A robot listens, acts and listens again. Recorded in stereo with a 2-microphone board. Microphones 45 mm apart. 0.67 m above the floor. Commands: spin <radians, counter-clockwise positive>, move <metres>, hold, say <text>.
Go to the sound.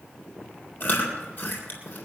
spin 0.70
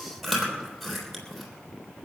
move 1.0
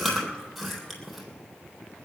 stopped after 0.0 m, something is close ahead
say Blocked. The chewing is further on, straight ahead.